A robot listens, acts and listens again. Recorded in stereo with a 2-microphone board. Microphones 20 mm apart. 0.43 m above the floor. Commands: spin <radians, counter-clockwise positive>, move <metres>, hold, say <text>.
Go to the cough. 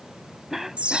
spin -0.35
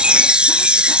hold
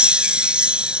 hold
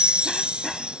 say I heard a cough, but can't make it out now. It was about straight ahead or 140° right. I did not reach it.